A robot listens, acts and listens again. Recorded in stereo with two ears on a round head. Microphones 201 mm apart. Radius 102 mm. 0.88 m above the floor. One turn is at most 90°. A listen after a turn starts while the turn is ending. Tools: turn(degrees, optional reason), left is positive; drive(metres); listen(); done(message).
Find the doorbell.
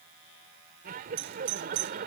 turn(degrees=-65, reason="The doorbell: about 65° right or 115° right.")
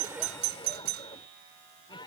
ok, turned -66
turn(degrees=-50, reason="So it is at 50° right.")
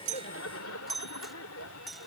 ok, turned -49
done("Facing the doorbell.")